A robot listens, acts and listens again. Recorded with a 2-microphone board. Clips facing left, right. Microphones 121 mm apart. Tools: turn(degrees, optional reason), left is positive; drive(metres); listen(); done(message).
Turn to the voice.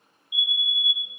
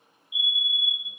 listen()
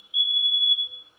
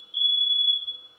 listen()
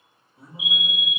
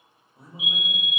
turn(degrees=-45, reason="The man speaking: about 45° right or 135° right.")
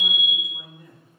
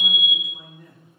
done("Found it: a man speaking, straight ahead, under 1 m away.")